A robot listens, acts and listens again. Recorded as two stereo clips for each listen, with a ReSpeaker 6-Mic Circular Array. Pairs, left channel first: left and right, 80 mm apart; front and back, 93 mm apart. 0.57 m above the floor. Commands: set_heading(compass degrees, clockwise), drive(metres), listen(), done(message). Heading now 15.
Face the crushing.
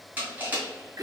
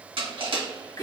set_heading(175)
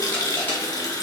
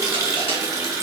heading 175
set_heading(150)
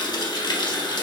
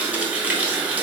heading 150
listen()
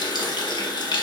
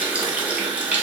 listen()
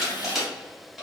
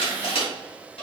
done("Facing the crushing.")